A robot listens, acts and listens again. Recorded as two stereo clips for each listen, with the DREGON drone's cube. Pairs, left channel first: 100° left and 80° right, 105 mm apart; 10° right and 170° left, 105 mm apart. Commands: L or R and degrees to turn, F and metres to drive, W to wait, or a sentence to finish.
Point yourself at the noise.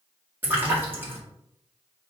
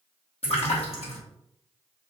R10
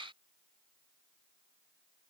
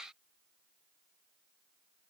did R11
I heard a splash from this way, but can't make it out now.